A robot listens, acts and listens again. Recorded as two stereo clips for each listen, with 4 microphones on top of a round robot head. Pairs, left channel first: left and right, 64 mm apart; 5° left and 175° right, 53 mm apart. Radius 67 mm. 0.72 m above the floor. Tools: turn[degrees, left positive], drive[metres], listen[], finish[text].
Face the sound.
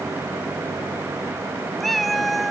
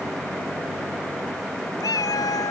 Action: finish[Facing the cat meowing.]